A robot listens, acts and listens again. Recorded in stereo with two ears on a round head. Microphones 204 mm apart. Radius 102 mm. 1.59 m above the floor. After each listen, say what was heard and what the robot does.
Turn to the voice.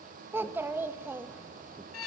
Turn 30° right.
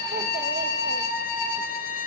Keep listening.
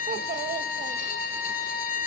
So it is at 140° right. Turn 140° right.
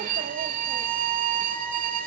Keep listening.
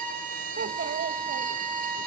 The child speaking is now 50° right. Turn 50° right.
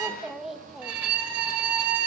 Facing the child speaking.